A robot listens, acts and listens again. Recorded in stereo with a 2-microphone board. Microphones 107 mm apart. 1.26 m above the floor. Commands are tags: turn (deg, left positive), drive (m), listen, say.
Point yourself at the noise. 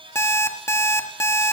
<turn deg="25"/>
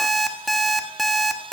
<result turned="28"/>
<say>Facing the alarm clock, 1 to 2 m away.</say>